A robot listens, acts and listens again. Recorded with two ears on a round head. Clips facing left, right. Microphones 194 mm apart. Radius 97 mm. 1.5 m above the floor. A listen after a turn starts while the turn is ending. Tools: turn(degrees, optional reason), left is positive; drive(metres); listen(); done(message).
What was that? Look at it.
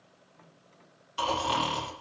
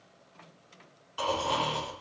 turn(degrees=25, reason="The snoring: about 25° left or 155° left.")
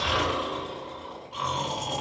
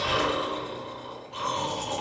done("Facing the snoring, 2 to 4 m away.")